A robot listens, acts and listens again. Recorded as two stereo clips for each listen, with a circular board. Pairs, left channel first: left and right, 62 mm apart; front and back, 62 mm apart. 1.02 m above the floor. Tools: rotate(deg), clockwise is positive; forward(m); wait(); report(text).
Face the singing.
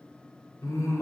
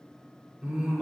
rotate(-105)
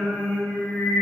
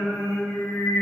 rotate(-25)
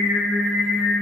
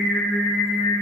report("Found it: singing, straight ahead, 2 to 4 m away.")